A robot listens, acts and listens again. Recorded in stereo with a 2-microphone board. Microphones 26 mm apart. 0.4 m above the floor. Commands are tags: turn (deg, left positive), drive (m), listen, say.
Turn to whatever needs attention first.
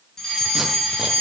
<turn deg="15"/>
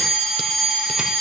<say>Facing the fire alarm, over 4 m away.</say>